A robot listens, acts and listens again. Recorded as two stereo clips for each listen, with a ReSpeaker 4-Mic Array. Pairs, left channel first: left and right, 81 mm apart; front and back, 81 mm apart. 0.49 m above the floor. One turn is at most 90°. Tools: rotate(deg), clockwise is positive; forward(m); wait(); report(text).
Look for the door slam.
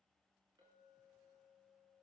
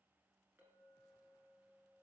wait()
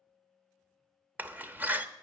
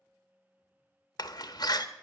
rotate(25)
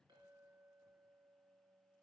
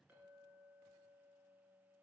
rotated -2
rotate(25)
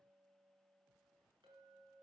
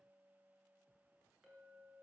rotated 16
rotate(10)
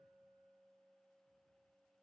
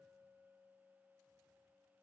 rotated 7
report("I heard a door slam from this way, but can't make it out now.")